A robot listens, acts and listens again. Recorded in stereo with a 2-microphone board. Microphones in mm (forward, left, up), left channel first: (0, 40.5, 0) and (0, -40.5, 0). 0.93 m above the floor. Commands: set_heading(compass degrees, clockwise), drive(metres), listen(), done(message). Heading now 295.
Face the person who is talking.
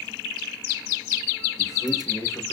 set_heading(255)
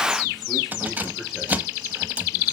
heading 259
listen()
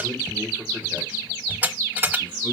set_heading(274)
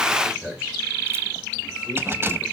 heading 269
set_heading(279)
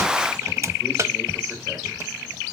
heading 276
listen()
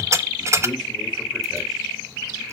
listen()
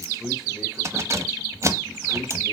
done("Found it: a man speaking, straight ahead.")